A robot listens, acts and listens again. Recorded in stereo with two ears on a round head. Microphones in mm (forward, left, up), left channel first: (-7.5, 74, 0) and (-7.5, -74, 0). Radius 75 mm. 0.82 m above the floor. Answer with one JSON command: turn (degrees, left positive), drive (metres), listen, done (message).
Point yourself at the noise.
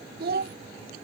{"turn": -60}
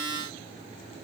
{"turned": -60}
{"listen": true}
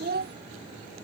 {"turn": -60}
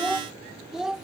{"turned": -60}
{"done": "Facing the child speaking."}